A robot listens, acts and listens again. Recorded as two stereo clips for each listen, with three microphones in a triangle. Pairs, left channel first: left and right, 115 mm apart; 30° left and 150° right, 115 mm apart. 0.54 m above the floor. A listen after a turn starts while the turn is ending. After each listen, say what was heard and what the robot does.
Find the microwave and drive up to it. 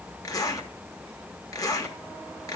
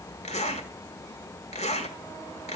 Keep listening.
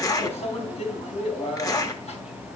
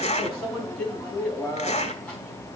The microwave: 110° left. Turn 110° left.
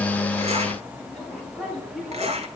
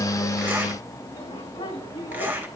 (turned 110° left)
Drive 1.0 m forward.
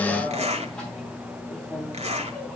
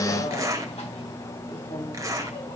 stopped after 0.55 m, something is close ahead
Something is in my way. I am facing the microwave but have not reached it.